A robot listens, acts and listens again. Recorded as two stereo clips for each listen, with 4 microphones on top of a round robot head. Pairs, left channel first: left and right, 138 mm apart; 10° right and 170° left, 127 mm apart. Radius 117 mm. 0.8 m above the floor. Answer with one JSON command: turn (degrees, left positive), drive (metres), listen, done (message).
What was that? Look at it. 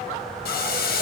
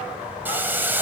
{"turn": 95}
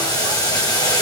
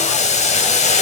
{"turn": 20}
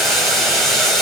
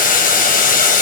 {"done": "Found it: boiling, straight ahead, 2 to 4 m away."}